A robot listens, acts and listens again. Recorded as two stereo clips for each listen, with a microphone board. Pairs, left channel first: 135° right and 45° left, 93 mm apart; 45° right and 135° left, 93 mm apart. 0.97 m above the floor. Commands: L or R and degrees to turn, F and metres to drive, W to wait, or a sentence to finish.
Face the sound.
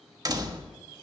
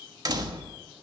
L90
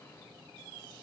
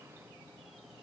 I heard a door slam from this way, but can't make it out now.